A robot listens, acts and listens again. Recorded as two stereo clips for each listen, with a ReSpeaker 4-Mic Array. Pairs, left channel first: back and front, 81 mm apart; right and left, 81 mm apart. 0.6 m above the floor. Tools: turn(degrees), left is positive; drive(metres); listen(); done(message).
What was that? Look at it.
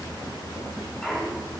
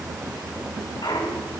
turn(degrees=-100)
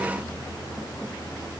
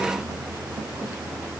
done("Facing where the clunk came from. I can't hear it now.")